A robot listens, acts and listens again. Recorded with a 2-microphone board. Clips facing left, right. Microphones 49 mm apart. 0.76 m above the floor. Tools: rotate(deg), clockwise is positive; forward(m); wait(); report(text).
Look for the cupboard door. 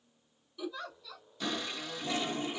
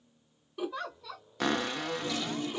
rotate(65)
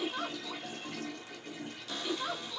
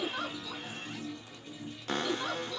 rotate(50)
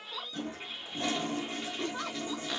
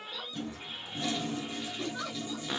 rotate(10)
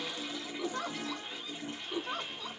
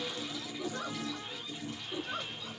wait()
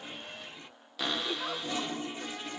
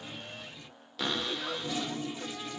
report("Facing the cupboard door.")